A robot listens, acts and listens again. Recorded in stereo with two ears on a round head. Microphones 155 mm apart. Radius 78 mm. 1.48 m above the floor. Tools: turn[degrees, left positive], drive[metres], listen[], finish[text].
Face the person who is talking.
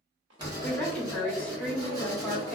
Action: turn[30]
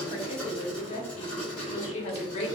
Thought: So it is at 145° left.
Action: turn[145]
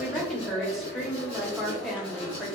Action: finish[Facing the woman speaking.]